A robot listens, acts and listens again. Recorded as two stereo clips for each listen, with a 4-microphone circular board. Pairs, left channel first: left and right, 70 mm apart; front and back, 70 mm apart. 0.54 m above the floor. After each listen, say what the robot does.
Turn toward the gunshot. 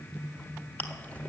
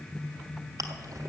Keep listening.
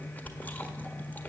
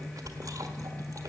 Keep listening.
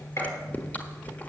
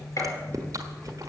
Turn 40° left.
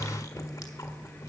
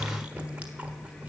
Facing where the gunshot came from. I can't hear it now.